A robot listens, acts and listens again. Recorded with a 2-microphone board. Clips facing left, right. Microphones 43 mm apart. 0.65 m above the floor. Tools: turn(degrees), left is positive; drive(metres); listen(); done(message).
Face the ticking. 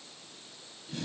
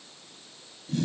listen()
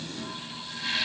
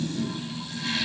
listen()
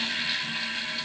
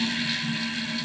done("I can't make out ticking, only a toilet flushing.")